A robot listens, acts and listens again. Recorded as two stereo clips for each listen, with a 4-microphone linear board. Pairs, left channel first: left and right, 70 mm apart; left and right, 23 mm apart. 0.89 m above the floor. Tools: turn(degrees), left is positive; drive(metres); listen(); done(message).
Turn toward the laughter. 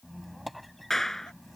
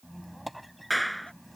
listen()
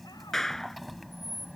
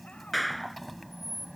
listen()
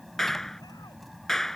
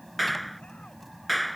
done("I can't make out laughter, only a squeak and a clap.")